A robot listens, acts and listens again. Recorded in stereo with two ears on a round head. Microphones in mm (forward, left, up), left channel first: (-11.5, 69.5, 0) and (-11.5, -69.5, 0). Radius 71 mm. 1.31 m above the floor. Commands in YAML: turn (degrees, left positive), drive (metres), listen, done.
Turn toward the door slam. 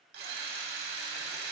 listen: true
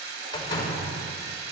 turn: 30
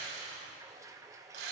listen: true
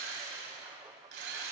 done: "I heard a door slam, but can't make it out now. It was about straight ahead or 120° left."